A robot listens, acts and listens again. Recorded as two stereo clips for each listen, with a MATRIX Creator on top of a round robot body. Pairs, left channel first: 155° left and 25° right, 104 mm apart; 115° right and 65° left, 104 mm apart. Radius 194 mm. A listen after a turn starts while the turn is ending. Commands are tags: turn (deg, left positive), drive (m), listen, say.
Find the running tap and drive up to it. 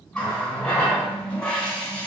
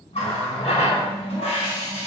<turn deg="-125"/>
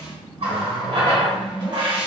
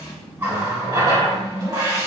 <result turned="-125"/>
<turn deg="10"/>
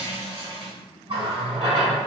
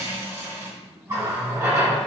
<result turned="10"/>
<drive m="1.0"/>
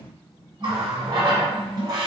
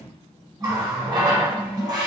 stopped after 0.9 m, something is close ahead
<turn deg="15"/>
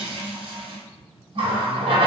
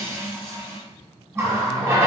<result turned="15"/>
<say>I am next to the running tap.</say>